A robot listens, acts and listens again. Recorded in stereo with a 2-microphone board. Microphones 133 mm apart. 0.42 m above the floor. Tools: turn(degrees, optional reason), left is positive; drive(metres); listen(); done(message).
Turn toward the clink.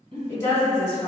listen()
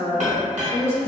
turn(degrees=-55, reason="The clink: about 55° right or 125° right.")
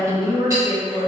listen()
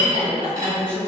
turn(degrees=-30, reason="So it is at 30° right.")
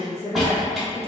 done("Found it: a clink, straight ahead.")